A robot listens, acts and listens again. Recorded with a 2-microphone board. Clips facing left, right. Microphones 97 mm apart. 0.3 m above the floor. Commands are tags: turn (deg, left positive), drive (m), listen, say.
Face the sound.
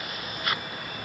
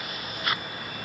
<listen/>
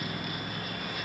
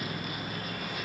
<listen/>
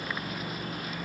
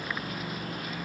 <say>I can't make out anything to turn to.</say>